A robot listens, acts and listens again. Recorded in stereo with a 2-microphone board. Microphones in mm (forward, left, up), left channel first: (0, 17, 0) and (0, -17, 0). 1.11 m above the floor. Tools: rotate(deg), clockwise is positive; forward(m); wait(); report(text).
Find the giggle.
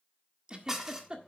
rotate(25)
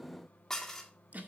rotate(130)
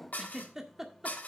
rotate(15)
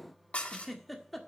report("Found it: a giggle, straight ahead, 1 to 2 m away.")